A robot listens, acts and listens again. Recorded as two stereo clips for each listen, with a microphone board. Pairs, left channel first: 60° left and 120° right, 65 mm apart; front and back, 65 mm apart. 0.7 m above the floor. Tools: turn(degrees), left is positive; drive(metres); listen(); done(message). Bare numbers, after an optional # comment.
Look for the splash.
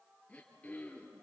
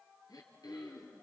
listen()
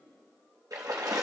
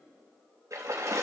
# The splash: 140° right.
turn(-140)
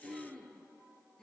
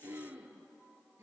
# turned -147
done("Facing where the splash came from. I can't hear it now.")